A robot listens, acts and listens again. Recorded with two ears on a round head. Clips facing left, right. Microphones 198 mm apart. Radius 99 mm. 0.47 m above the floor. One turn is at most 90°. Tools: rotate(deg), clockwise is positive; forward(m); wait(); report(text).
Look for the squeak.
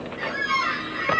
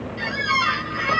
rotate(55)
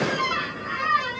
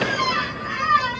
rotate(65)
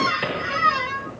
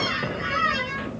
rotate(10)
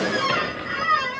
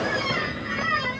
report("Found it: a squeak, straight ahead, 1 to 2 m away.")